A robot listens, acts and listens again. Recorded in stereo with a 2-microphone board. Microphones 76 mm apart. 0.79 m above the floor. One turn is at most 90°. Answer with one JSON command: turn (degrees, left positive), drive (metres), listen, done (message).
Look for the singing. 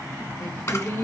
{"turn": 40}
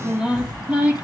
{"turn": -15}
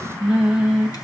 {"turn": -20}
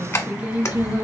{"turn": -30}
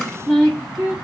{"turn": -15}
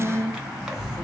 {"done": "Facing the singing, 1 to 2 m away."}